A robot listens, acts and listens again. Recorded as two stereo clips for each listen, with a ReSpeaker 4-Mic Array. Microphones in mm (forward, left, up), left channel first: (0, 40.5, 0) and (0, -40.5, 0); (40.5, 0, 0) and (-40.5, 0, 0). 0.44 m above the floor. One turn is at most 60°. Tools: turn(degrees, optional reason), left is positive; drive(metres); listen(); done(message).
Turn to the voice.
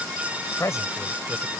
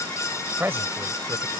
turn(degrees=60, reason="The man speaking: 125° left.")
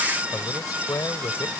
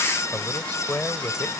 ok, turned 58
turn(degrees=60, reason="The man speaking is now 70° left.")
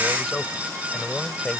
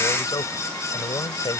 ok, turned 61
turn(degrees=10, reason="The man speaking is now 10° left.")
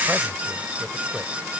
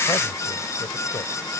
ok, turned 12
listen()
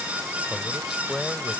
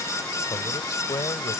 done("Facing the man speaking.")